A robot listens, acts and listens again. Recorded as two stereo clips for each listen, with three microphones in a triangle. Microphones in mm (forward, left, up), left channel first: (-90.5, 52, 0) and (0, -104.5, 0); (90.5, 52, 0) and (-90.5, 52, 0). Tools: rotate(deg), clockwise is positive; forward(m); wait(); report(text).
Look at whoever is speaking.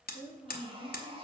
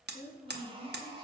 rotate(35)
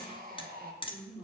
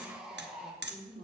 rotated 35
rotate(20)
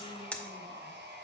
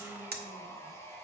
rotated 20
wait()
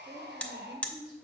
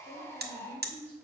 rotate(10)
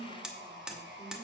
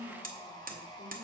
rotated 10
rotate(10)
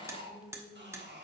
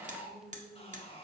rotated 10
report("Found it: a woman speaking, straight ahead.")